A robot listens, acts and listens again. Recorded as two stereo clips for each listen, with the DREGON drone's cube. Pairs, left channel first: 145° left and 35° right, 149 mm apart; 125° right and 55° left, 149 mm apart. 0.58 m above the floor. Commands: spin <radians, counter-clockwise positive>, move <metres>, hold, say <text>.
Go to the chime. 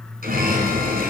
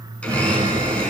spin -0.17
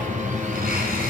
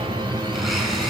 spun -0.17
move 1.0
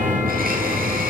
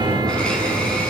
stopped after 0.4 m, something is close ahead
say Something is in my way. I am facing the chime but have not reached it.